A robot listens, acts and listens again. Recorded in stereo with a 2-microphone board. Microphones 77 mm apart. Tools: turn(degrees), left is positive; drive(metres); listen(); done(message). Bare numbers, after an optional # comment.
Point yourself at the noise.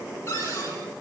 # The cupboard door: about 35° left or 145° left.
turn(35)
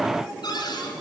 # So it is at 110° left.
turn(110)
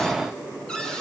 # The cupboard door is now 10° left.
turn(10)
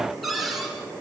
done("Found it: a cupboard door, straight ahead.")